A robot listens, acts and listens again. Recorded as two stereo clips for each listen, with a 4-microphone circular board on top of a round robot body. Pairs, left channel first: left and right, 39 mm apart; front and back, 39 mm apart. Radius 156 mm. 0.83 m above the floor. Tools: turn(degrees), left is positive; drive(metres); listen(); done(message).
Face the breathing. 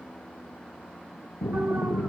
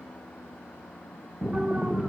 turn(degrees=95)
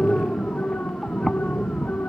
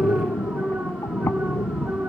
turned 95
done("Facing the breathing.")